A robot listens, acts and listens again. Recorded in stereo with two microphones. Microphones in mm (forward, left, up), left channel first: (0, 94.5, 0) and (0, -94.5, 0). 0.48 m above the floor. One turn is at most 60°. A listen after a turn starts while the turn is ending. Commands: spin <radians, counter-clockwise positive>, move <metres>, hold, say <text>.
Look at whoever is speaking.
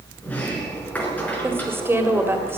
spin -0.52
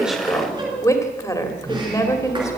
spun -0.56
spin 0.35
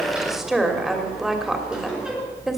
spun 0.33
say Facing the woman speaking, 2 to 4 m away.